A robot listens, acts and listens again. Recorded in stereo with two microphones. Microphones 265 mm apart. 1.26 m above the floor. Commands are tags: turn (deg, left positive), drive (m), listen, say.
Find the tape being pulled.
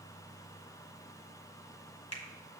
<listen/>
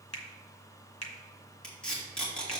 <turn deg="30"/>
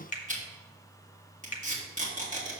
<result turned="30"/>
<turn deg="-30"/>
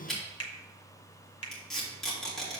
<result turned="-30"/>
<say>Facing the tape being pulled.</say>